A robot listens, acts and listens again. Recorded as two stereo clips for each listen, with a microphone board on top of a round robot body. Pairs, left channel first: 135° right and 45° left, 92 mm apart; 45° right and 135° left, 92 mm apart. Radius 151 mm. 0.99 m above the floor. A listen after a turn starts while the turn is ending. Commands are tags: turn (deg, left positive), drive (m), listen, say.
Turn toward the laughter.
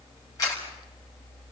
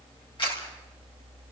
<listen/>
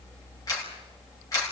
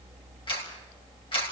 <listen/>
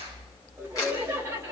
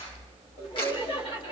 <turn deg="-20"/>
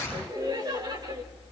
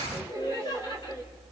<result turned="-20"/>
<say>Found it: laughter, straight ahead.</say>